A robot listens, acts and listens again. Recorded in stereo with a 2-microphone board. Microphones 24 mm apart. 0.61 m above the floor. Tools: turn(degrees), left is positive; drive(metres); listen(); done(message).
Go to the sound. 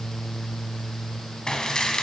turn(degrees=35)
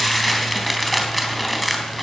drive(metres=1.0)
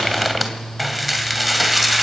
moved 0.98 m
drive(metres=1.0)
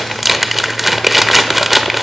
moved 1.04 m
drive(metres=1.0)
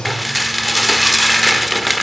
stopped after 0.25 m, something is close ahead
done("Arrived at the dishes clattering, straight ahead.")